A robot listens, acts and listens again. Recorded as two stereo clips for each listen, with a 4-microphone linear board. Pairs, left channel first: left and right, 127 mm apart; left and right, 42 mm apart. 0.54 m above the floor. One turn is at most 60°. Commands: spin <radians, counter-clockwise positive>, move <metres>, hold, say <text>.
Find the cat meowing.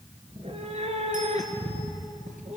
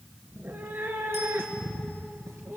spin -1.05
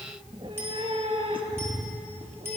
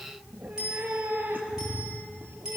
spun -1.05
spin -0.87
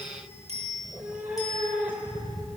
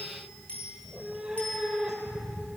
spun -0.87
spin -0.17
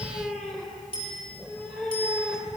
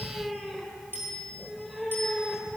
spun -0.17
say Facing the cat meowing.